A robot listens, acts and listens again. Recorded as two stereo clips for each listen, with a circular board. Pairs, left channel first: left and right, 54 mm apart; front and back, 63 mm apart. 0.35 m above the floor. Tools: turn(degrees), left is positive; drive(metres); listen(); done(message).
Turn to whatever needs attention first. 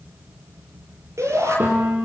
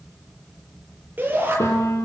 turn(degrees=-120)
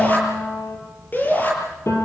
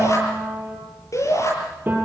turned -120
turn(degrees=35)
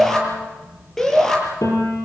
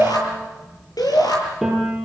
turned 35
done("Facing the shout, over 4 m away.")